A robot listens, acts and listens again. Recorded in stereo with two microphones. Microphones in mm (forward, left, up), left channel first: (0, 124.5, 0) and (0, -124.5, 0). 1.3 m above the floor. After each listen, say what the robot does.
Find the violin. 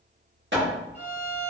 Turn 60° right.
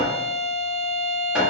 Turn 65° right.
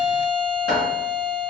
Turn 25° left.
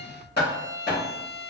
Turn 10° right.
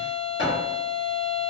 Facing the violin, 1 to 2 m away.